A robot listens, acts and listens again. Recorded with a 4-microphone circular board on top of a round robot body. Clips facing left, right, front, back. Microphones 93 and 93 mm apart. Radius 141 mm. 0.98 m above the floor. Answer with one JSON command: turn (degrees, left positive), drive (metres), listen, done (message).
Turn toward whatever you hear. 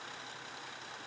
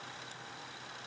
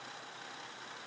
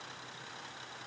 {"listen": true}
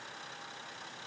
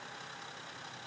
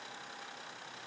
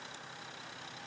{"listen": true}
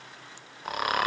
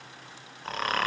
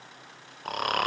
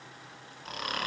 {"turn": 10}
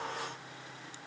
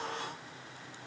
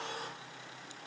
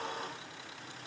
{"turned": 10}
{"listen": true}
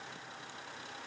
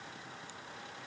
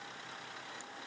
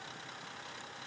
{"listen": true}
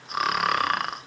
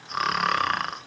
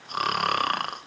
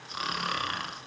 {"done": "Facing the snoring, 1 to 2 m away."}